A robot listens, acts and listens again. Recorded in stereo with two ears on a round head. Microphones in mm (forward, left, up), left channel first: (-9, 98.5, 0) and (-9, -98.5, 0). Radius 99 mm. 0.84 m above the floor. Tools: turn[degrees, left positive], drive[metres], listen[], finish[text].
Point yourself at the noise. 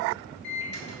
Thought: The microwave: about 55° left or 125° left.
Action: turn[55]
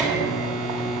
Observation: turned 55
Action: finish[Found it: a microwave, straight ahead.]